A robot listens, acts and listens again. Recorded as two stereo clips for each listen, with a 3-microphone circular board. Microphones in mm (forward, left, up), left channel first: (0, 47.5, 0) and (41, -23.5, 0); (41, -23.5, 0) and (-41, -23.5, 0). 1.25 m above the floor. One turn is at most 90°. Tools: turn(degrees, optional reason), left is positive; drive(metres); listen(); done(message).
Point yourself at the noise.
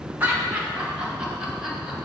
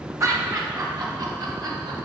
turn(degrees=-90, reason="The laughter: 145° right.")
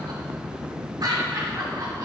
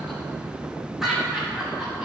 turn(degrees=-90, reason="The laughter is now 95° right.")
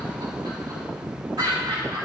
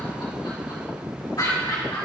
turn(degrees=-30, reason="The laughter is now 30° right.")
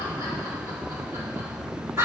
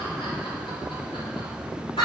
done("Facing the laughter.")